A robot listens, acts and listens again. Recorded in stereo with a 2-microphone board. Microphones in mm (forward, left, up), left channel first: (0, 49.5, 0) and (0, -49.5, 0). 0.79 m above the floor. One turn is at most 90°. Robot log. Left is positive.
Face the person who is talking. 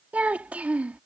note: The child speaking: about 15° right or 165° right.
cmd yaw -15
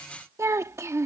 note: So it is at 150° right.
cmd yaw -90
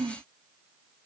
note: The child speaking is now 55° right.
cmd yaw -55
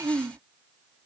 note: The child speaking is now 35° right.
cmd yaw -35
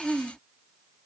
end: Found it: a child speaking, straight ahead.